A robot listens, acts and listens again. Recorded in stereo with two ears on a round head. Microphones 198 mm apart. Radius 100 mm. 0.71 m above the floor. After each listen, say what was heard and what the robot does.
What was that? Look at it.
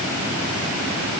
Keep listening.
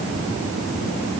Keep listening.
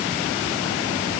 I can't make out anything.